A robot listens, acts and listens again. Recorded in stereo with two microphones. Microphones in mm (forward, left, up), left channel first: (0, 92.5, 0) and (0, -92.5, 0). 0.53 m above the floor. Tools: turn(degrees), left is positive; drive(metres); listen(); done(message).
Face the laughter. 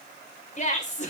turn(degrees=40)
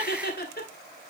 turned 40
turn(degrees=90)
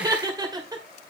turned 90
turn(degrees=-25)
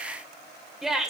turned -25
done("Facing the laughter.")